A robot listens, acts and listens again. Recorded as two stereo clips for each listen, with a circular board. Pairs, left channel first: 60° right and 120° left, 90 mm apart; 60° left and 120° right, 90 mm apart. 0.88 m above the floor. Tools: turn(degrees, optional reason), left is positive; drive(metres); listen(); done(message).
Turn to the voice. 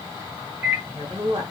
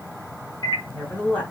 turn(degrees=135, reason="The woman speaking: 135° left.")
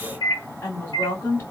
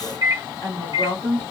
done("Found it: a woman speaking, straight ahead, 1 to 2 m away.")